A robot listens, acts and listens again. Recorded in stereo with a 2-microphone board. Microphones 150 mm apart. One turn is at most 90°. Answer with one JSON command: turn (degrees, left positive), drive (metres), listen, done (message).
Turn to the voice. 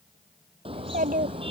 {"turn": -70}
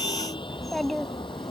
{"done": "Found it: a child speaking, straight ahead."}